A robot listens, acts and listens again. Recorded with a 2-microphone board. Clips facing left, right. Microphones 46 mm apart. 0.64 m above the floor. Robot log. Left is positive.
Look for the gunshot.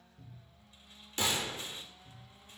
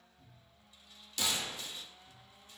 note: The gunshot: about 35° left or 145° left.
cmd yaw +35
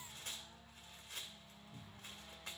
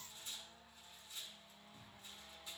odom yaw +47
cmd idle
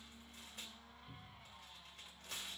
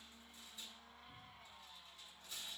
end: I heard a gunshot, but can't make it out now. It was about 10° right or 95° left.